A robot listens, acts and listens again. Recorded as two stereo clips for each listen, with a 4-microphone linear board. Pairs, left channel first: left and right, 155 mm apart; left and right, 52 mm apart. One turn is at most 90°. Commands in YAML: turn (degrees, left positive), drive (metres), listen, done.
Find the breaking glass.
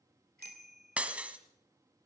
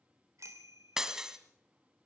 turn: -30
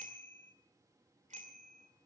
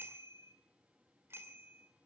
listen: true
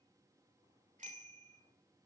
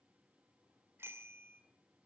done: "I heard breaking glass, but can't make it out now. It was about 20° left or 140° right."